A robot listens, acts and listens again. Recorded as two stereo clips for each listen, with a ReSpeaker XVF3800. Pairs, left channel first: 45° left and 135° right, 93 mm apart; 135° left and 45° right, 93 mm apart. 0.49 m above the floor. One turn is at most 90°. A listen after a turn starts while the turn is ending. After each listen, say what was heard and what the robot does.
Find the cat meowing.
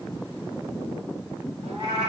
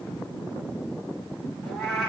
The cat meowing: 135° right. Turn 90° right.
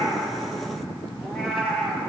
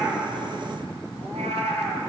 The cat meowing is now 40° right. Turn 40° right.
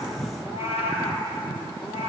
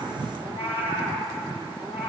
The cat meowing is now 25° left. Turn 25° left.
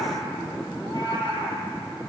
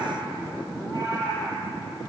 Facing the cat meowing.